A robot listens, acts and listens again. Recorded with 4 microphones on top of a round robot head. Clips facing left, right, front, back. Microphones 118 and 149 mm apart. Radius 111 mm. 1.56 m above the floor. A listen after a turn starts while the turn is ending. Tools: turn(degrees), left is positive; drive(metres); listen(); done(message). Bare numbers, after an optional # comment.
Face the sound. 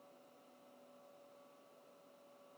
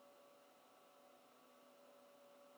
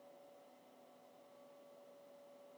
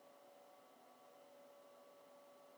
listen()
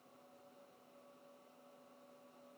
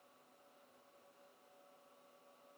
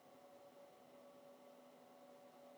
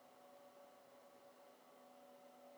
listen()
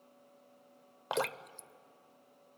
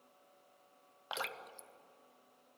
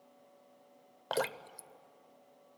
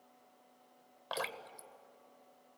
# The dripping: 45° left.
turn(45)
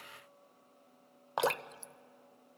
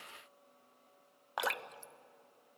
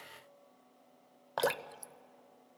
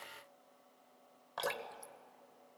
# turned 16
# The dripping is now 30° left.
turn(30)
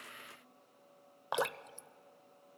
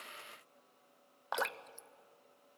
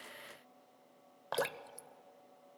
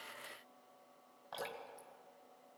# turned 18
# The dripping is now 10° left.
turn(10)
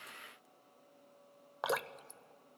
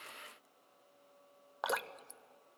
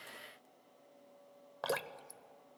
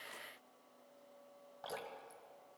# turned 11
done("Facing the dripping.")